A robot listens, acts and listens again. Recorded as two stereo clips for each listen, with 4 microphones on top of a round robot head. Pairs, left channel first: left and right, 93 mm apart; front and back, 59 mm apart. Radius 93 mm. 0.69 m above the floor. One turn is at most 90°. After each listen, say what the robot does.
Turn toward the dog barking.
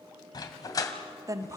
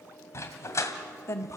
Turn 40° left.
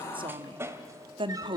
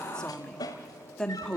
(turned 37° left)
Turn 25° right.
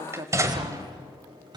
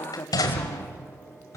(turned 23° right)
Turn 35° right.
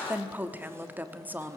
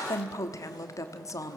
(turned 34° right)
Keep listening.
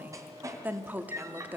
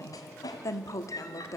Turn 35° right.
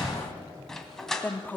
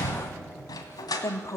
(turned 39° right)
Facing the dog barking.